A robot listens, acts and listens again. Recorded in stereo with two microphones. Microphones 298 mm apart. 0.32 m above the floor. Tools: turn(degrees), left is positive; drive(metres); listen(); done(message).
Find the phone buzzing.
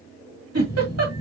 turn(degrees=20)
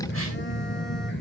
turn(degrees=140)
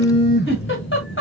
turn(degrees=35)
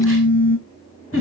turn(degrees=30)
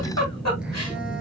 done("Facing the phone buzzing.")